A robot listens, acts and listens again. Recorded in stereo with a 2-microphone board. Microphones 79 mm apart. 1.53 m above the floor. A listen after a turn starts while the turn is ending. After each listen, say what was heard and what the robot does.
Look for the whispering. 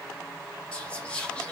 Turn 30° left.
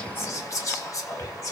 So it is at 135° left. Turn 135° left.
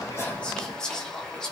The whispering is now 10° left. Turn 10° left.
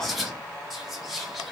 Found it: whispering, straight ahead.